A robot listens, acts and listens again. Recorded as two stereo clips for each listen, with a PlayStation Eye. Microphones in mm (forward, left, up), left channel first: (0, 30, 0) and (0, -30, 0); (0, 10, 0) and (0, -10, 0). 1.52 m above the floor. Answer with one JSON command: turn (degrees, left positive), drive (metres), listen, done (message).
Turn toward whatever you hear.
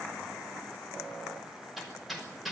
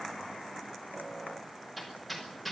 {"turn": 30}
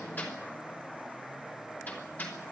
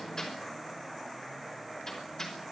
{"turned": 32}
{"turn": 150}
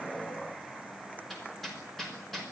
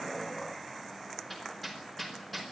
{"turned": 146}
{"done": "Found it: hammering, straight ahead, over 4 m away."}